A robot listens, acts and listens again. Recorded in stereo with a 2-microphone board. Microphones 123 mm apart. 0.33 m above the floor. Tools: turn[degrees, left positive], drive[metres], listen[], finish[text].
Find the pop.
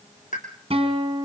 Action: turn[90]
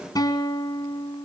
Action: finish[Facing where the pop came from. I can't hear it now.]